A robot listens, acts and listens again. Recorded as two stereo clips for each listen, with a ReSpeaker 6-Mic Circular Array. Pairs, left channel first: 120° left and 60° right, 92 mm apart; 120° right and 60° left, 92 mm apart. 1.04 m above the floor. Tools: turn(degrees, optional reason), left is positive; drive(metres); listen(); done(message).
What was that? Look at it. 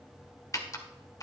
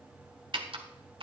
turn(degrees=70, reason="The typing on a keyboard: 70° left.")
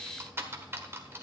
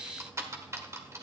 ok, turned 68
done("Found it: typing on a keyboard, straight ahead.")